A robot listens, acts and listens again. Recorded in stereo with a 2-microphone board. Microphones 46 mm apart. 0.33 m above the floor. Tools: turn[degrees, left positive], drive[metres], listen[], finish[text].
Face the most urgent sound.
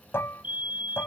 Thought: The fire alarm: about 35° right or 145° right.
Action: turn[-35]
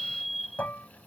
Action: finish[Found it: a fire alarm, straight ahead.]